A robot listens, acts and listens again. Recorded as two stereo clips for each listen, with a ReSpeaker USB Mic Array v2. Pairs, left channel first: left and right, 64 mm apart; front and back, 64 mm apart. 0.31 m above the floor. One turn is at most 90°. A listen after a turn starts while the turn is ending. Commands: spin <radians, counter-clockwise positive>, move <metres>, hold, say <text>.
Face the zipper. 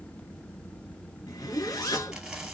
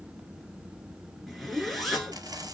spin 1.57
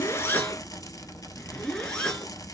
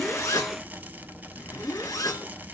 spin 0.26
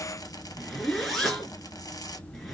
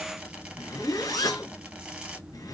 say Found it: a zipper, straight ahead.